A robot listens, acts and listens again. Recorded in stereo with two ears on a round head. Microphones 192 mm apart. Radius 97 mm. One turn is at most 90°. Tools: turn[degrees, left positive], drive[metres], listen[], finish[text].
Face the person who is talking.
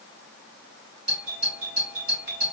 Action: listen[]
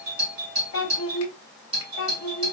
Thought: The child speaking: about 65° left or 115° left.
Action: turn[65]
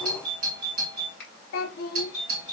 Thought: So it is at 45° left.
Action: turn[45]
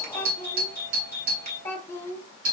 Thought: The child speaking is now 10° left.
Action: turn[10]
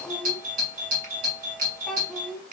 Action: finish[Found it: a child speaking, straight ahead.]